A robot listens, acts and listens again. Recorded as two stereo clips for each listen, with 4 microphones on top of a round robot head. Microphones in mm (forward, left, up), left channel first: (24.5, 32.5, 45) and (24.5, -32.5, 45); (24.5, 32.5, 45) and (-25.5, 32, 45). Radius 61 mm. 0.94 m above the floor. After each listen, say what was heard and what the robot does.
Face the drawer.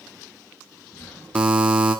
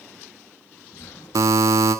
The drawer: 20° left. Turn 20° left.
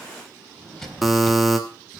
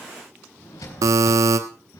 Facing the drawer.